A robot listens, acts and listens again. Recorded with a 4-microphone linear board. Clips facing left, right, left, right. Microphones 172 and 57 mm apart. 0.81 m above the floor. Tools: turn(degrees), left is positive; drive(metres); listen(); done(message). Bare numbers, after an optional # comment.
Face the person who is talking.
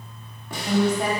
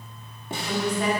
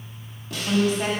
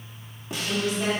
# The woman speaking: about 45° left or 135° left.
turn(45)
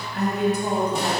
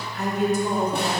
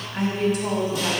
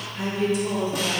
# So it is at 85° left.
turn(85)
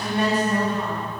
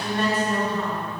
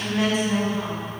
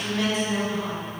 # The woman speaking is now 15° left.
turn(15)
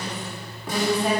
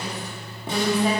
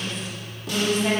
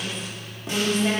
done("Found it: a woman speaking, straight ahead.")